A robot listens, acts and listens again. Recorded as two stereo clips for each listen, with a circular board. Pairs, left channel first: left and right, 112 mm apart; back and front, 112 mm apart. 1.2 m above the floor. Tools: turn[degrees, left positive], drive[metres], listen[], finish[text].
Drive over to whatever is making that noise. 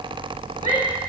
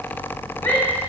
Thought: The shout: 110° left.
Action: turn[110]
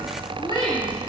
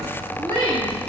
Thought: The shout is now 50° left.
Action: turn[50]
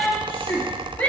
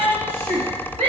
Thought: The shout is now 15° left.
Action: turn[15]
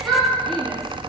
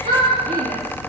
Action: drive[1.0]
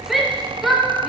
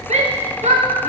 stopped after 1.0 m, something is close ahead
Action: finish[I am next to the shout.]